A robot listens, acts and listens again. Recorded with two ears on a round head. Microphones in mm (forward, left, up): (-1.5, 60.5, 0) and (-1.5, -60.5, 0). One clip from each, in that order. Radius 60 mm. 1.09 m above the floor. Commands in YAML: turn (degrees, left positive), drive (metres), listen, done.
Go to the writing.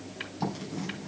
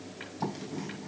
turn: 30
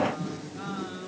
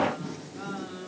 turn: -25
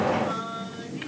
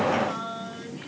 turn: -10
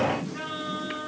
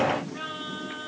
drive: 1.0
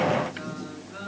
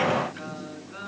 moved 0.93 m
drive: 1.0
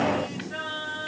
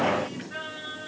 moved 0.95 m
drive: 1.0
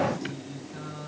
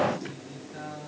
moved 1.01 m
drive: 1.0
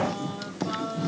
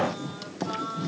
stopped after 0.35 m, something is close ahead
done: "I am next to the writing."